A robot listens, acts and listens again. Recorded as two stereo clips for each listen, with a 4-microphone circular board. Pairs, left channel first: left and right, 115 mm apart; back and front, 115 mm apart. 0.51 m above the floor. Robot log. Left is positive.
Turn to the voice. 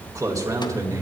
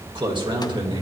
note: The man speaking: 35° right.
cmd yaw -35
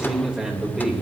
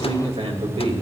note: The man speaking is now 10° right.
cmd yaw -10
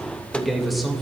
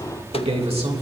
end: Found it: a man speaking, straight ahead, 2 to 4 m away.